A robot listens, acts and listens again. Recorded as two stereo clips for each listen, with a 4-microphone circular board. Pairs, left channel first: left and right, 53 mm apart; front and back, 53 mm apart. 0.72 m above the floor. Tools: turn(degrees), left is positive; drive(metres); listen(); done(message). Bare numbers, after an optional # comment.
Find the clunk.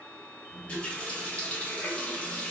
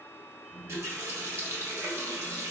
listen()
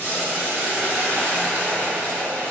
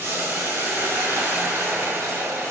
listen()
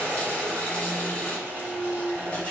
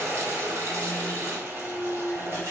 # The clunk: 60° left.
turn(60)
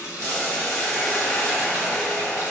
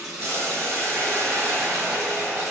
done("Facing where the clunk came from. I can't hear it now.")